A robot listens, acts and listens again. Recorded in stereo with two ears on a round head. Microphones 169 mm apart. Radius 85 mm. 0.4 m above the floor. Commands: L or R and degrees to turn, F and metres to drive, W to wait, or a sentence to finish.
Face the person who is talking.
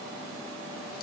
W
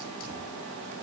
W
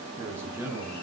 R30
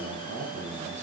R135
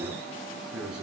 Found it: a man speaking, straight ahead, over 4 m away.